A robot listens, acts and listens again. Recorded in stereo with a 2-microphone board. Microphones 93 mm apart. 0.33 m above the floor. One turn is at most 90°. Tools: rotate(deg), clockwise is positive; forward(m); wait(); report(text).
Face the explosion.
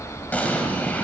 rotate(-15)
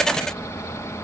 wait()
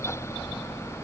report("I heard an explosion, but can't make it out now. It was about straight ahead or 150° left.")